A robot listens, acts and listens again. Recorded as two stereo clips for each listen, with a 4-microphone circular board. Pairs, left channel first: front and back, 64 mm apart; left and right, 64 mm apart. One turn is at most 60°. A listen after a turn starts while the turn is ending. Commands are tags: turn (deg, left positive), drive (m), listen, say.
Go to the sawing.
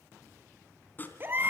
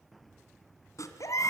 <turn deg="60"/>
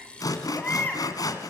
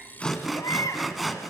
<drive m="1.0"/>
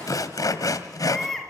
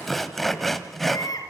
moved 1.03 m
<drive m="1.0"/>
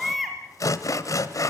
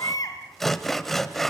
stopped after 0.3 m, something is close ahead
<say>I am next to the sawing.</say>